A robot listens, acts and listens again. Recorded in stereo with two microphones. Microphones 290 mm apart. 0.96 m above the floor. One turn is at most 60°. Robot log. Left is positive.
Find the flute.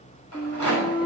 note: The flute: about 15° left or 165° left.
cmd yaw +15
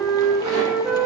end: Facing the flute.